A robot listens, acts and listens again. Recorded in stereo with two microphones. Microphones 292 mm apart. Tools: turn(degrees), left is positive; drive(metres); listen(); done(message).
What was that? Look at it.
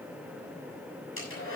turn(degrees=45)
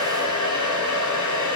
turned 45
turn(degrees=90)
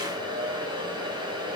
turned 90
turn(degrees=-15)
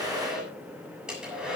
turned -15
done("Facing the hair dryer.")